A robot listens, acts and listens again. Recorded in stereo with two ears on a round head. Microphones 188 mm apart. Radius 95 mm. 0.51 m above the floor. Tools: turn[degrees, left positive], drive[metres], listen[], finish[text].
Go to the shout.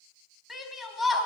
Action: turn[30]
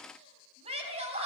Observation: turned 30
Thought: So it is at 30° right.
Action: turn[-30]
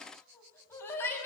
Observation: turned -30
Thought: The shout is now 10° left.
Action: turn[10]
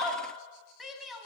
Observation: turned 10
Action: drive[1.0]
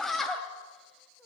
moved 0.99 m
Action: drive[1.0]
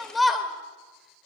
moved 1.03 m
Action: drive[1.0]
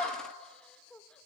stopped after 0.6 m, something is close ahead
Action: finish[I am next to the shout.]